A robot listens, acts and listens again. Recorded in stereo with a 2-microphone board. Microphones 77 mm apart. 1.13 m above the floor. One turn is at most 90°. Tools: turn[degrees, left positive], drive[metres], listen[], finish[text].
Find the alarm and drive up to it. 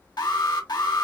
Thought: The alarm: about 65° left or 115° left.
Action: turn[65]
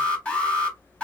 Thought: So it is at 15° left.
Action: turn[15]
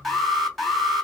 Action: drive[1.0]
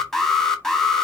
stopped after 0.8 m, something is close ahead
Action: finish[Arrived at the alarm, straight ahead.]